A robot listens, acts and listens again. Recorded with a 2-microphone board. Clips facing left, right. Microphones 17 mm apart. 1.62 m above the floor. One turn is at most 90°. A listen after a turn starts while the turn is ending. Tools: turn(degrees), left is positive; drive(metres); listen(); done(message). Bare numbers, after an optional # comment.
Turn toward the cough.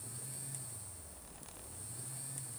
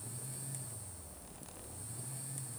listen()
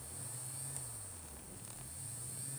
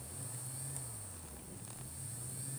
listen()
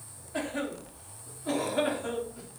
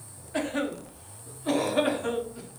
# The cough: about 40° right or 140° right.
turn(-40)
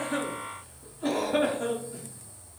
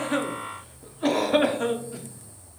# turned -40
# So it is at 100° right.
turn(-90)
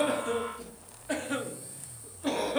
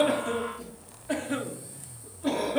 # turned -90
# The cough is now 15° left.
turn(15)
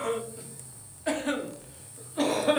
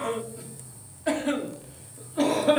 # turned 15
# The cough is now 10° left.
turn(10)
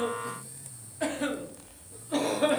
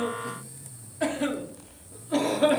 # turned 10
done("Found it: a cough, straight ahead, 1 to 2 m away.")